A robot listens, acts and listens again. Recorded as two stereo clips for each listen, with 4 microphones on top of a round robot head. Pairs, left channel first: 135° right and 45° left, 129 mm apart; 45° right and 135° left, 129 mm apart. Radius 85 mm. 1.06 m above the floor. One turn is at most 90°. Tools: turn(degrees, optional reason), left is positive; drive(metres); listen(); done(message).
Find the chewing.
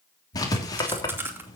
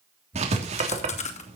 turn(degrees=-25, reason="The chewing: 25° right.")
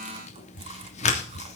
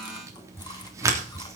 listen()
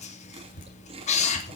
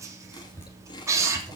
turn(degrees=10, reason="The chewing is now 10° left.")
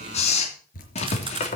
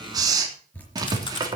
done("Found it: chewing, straight ahead, 2 to 4 m away.")